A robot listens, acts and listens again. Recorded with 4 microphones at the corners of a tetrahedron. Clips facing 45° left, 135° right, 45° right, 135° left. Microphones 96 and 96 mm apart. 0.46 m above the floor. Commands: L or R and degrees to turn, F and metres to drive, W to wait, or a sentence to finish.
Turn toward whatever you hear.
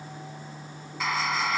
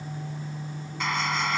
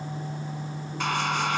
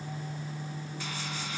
R45
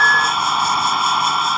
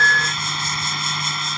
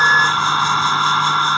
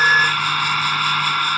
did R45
L15
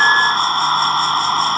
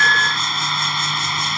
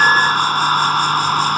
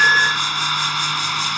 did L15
Facing the hair dryer.